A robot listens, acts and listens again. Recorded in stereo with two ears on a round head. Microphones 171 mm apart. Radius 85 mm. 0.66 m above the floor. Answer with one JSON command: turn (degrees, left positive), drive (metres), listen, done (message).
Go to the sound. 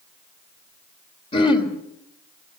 {"turn": 30}
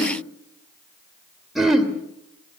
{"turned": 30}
{"drive": 1.0}
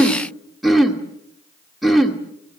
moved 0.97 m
{"drive": 1.0}
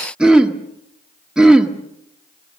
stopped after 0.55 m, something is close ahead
{"done": "Arrived at the throat clearing, straight ahead."}